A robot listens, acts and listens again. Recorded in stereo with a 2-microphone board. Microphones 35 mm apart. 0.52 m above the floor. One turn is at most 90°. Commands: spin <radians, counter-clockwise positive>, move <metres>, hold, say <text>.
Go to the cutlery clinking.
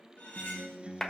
spin 1.05
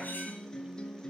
hold
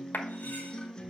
hold
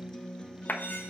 say I heard cutlery clinking, but can't make it out now. It was about straight ahead or 60° left. I did not reach it.